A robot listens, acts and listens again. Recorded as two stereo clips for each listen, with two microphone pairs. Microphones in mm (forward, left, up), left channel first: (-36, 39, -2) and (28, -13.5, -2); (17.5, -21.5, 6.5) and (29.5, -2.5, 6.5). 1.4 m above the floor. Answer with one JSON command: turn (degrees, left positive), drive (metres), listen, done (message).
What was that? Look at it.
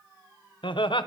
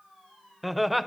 {"turn": 135}
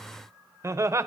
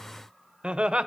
{"turn": 15}
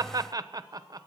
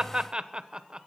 {"done": "Found it: laughter, straight ahead, 1 to 2 m away."}